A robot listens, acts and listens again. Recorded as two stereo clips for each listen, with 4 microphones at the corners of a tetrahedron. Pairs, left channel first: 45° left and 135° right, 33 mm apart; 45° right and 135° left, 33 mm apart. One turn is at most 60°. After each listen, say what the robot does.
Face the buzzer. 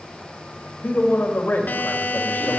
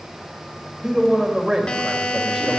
Turn 15° left.
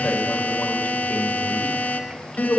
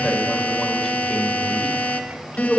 Facing the buzzer.